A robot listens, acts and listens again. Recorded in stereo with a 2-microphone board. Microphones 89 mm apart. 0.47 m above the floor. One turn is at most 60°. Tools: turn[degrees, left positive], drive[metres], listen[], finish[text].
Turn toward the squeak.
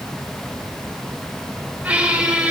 Thought: The squeak: about 15° right or 165° right.
Action: turn[-15]
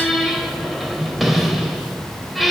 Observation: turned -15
Action: finish[Facing the squeak.]